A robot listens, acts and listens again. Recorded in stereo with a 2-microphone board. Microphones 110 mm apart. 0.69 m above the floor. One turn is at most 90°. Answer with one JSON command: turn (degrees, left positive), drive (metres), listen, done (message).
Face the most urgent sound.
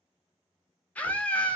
{"turn": 30}
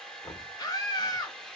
{"turn": 90}
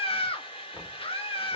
{"turn": 90}
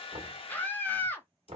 {"turn": 20}
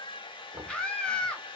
{"turn": 10}
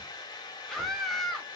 {"done": "Facing the scream, under 1 m away."}